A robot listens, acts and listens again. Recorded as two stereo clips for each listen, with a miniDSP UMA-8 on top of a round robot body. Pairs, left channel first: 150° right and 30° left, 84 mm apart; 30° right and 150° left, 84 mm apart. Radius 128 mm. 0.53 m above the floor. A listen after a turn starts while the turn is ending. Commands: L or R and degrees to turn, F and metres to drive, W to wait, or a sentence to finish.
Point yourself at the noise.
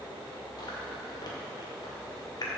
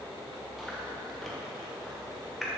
R120
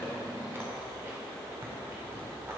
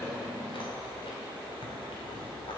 W
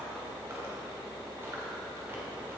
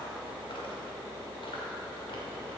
W
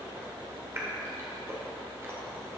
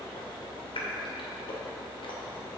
R30
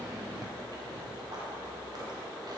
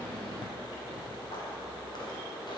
W
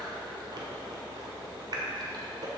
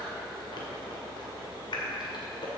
Facing the chewing.